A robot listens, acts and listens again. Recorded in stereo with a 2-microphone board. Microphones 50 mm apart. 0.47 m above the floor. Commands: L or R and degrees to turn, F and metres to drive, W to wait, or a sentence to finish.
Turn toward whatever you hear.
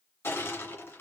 L55
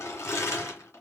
L65
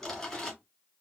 Found it: crushing, straight ahead.